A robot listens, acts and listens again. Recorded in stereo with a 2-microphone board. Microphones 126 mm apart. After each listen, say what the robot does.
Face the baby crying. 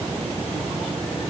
Keep listening.
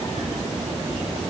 Keep listening.
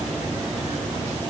I can't make out a baby crying.